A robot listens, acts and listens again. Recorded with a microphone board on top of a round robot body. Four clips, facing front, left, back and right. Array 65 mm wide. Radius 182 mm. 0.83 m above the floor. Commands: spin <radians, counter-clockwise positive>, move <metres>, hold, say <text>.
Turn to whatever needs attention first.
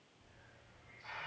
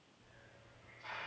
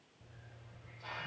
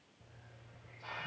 hold
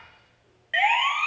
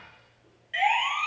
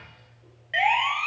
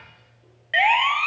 spin -1.40
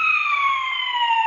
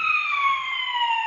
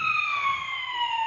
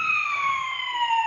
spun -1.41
say Found it: a siren, straight ahead.